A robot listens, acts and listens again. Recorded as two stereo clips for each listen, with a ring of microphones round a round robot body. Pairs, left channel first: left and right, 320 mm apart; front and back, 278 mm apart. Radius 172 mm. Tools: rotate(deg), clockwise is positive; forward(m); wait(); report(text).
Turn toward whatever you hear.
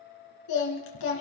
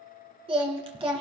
rotate(-110)
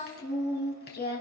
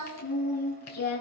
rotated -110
rotate(-30)
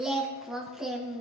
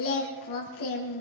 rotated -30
report("Found it: singing, straight ahead, 2 to 4 m away.")